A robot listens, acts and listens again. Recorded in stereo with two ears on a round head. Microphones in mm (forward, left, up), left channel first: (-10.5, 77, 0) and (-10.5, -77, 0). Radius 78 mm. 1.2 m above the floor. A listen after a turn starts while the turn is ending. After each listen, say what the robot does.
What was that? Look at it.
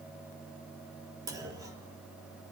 Turn 20° right.
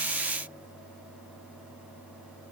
Keep listening.
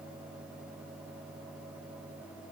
I heard a clunk, but can't make it out now. It was about straight ahead or 140° right.